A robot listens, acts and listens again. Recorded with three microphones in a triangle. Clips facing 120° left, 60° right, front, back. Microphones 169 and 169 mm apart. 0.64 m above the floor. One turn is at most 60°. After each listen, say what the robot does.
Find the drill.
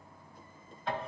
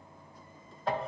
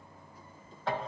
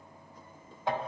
Keep listening.
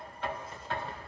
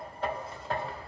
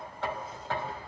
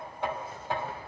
Keep listening.
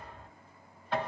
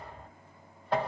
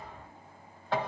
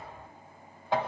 I can't make out a drill to turn to.